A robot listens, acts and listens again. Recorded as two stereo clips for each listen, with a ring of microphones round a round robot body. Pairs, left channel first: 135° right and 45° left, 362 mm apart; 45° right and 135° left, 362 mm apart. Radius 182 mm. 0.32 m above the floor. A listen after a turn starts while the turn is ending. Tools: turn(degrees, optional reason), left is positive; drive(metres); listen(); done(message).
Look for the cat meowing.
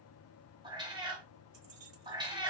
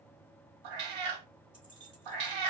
turn(degrees=125, reason="The cat meowing: 125° left.")
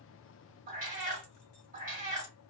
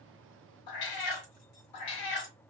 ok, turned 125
turn(degrees=-25, reason="The cat meowing is now 25° right.")
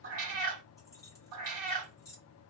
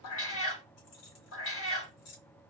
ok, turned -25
turn(degrees=10, reason="The cat meowing is now 10° left.")
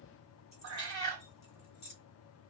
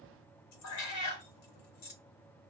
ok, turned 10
done("Facing the cat meowing, 1 to 2 m away.")